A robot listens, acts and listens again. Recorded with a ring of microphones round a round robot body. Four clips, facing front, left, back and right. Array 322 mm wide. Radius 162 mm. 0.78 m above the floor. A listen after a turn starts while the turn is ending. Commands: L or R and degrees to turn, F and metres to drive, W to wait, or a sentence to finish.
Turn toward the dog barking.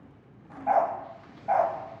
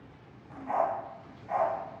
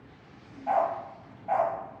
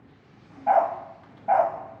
R75
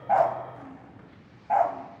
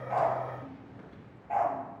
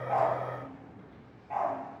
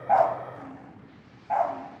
R20
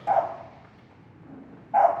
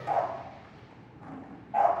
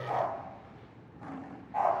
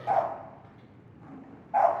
R10
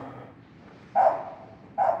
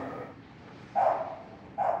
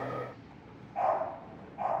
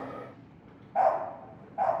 Found it: a dog barking, straight ahead.